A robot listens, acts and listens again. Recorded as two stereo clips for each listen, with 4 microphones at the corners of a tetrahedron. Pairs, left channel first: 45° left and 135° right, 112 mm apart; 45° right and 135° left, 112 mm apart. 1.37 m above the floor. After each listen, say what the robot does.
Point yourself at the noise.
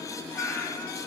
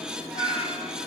Turn 30° right.
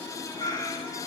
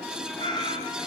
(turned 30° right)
Facing the cat meowing, 2 to 4 m away.